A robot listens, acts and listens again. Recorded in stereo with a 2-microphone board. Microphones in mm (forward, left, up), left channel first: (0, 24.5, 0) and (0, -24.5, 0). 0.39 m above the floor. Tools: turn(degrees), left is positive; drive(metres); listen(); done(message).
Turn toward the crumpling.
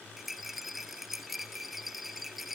listen()
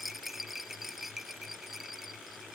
listen()
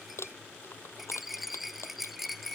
turn(degrees=60)
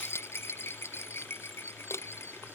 turn(degrees=60)
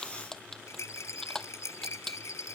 turn(degrees=10)
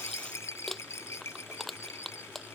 done("Found it: crumpling, straight ahead.")